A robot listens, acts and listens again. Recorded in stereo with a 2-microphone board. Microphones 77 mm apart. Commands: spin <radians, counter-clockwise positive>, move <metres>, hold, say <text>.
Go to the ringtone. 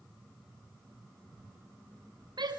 hold
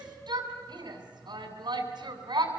hold
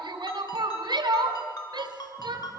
spin 1.05
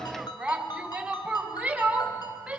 spin 1.05
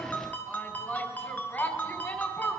spin 0.35
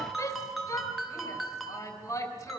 move 1.0
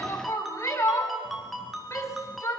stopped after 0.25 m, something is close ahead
say Blocked. The ringtone is further on, straight ahead.